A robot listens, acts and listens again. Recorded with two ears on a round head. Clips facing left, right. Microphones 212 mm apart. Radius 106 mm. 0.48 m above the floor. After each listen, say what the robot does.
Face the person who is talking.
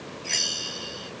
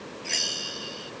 Keep listening.
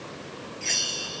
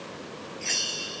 Keep listening.
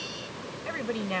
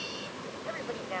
Turn 50° left.
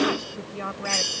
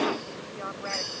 Turn 70° left.
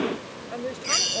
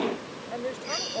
Found it: a woman speaking, straight ahead.